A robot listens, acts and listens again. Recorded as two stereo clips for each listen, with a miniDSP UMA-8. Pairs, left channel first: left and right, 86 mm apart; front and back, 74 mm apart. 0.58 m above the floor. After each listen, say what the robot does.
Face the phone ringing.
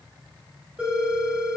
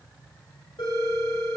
Turn 15° right.
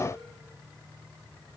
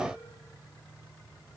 Keep listening.
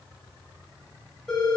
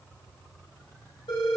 Facing the phone ringing.